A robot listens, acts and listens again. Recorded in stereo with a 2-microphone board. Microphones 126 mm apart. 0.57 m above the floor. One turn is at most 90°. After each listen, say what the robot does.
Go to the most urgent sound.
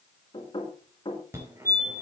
Turn 20° right.
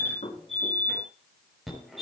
Drive 1.0 m forward.
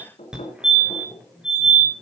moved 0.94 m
Drive 1.0 m forward.
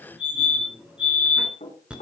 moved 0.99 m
Turn 10° right.
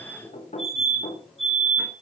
Drive 1.0 m forward.
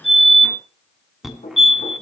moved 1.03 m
Drive 1.0 m forward.
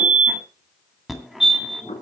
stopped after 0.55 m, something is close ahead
I am next to the fire alarm.